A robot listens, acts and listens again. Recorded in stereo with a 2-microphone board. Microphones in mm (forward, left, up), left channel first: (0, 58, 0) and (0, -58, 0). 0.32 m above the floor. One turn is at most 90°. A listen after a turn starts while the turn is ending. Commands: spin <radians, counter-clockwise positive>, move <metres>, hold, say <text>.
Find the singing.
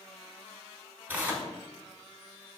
hold
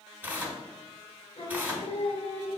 spin 1.05
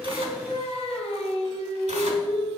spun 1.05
spin 1.05
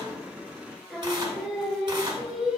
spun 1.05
say Found it: singing, straight ahead, under 1 m away.